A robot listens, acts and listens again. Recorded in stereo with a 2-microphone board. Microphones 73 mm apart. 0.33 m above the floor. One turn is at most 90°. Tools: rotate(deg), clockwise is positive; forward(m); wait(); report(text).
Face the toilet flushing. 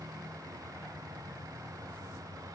wait()
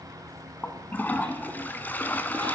rotate(-25)
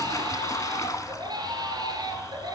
rotate(-90)
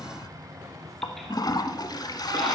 rotate(-60)
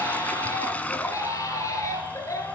rotate(-20)
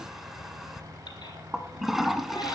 report("Found it: a toilet flushing, straight ahead, 1 to 2 m away.")